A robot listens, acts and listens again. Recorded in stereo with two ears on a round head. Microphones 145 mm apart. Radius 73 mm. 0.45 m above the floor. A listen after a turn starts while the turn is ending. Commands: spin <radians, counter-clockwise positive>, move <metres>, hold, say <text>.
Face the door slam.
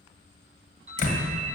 spin 1.05
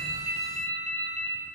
hold
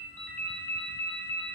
say I heard a door slam, but can't make it out now. It was about straight ahead or 60° left.